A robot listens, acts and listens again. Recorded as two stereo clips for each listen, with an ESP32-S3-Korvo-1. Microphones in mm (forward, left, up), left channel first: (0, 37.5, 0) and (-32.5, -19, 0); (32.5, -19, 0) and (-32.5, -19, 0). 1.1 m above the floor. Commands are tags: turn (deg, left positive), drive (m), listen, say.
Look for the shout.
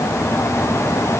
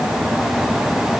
<listen/>
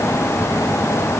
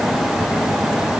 <listen/>
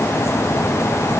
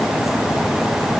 <say>I can't make out a shout to turn to.</say>